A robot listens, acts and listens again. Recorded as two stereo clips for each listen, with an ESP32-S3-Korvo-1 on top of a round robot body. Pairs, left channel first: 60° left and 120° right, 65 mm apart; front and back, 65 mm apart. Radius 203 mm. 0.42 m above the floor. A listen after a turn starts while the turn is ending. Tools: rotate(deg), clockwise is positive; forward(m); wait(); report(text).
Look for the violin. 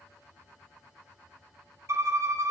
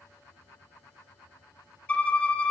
rotate(70)
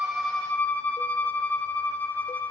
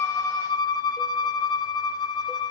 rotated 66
report("Facing the violin.")